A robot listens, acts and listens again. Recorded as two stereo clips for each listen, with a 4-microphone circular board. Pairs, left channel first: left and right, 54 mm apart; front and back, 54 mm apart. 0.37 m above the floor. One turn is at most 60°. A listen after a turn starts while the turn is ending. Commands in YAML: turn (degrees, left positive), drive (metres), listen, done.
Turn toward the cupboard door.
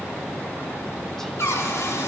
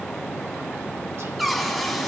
turn: 60
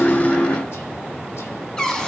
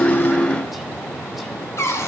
turn: 15
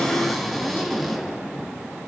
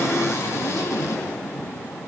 done: "Found it: a cupboard door, straight ahead."